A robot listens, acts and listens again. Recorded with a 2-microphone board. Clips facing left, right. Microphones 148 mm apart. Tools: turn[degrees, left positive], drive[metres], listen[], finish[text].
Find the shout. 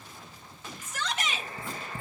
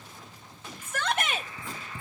Thought: The shout: about 55° right or 125° right.
Action: turn[-55]
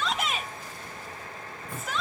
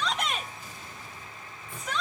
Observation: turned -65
Action: finish[Found it: a shout, straight ahead.]